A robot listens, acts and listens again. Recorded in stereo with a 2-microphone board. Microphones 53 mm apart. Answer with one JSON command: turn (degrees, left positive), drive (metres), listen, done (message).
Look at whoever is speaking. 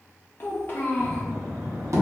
{"turn": 40}
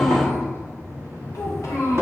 {"turn": 100}
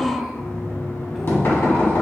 {"turn": -10}
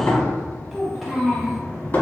{"done": "Facing the child speaking, under 1 m away."}